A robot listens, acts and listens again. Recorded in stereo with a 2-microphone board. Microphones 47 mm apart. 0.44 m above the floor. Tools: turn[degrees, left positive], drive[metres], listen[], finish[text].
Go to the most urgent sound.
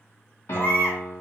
Thought: The baby crying: about 50° left or 130° left.
Action: turn[50]
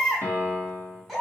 Action: drive[1.0]
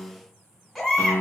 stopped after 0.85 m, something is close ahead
Action: finish[Arrived at the baby crying, straight ahead.]